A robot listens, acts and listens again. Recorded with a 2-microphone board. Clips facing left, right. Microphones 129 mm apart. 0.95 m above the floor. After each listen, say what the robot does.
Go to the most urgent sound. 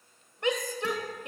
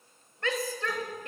Turn 20° left.
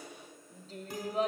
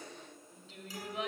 Turn 140° left.
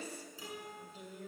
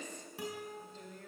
Turn 10° left.
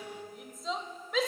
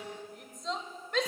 Drive 1.0 m forward.
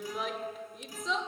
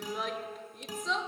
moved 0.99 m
Drive 1.0 m forward.
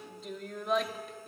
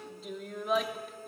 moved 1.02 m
Drive 1.0 m forward.
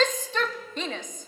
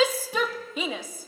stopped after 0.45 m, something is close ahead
Turn 10° right.
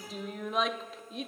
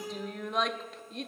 Arrived at the shout, straight ahead.